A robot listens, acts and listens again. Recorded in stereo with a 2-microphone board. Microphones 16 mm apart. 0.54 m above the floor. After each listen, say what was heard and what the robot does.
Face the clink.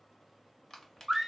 Keep listening.
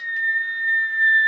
Keep listening.
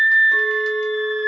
Turn 30° right.
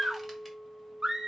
So it is at 140° right. Turn 140° right.
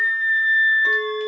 The clink is now 45° right. Turn 45° right.
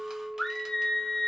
Facing the clink.